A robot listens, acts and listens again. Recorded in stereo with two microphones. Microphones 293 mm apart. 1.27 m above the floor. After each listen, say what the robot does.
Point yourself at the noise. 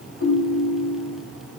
Turn 50° left.
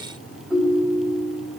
Found it: a ringtone, straight ahead, over 4 m away.